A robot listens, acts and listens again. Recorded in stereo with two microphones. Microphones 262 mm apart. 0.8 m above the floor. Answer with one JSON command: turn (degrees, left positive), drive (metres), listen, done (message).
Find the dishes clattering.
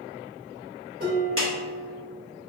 {"turn": -35}
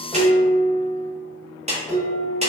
{"done": "Facing the dishes clattering."}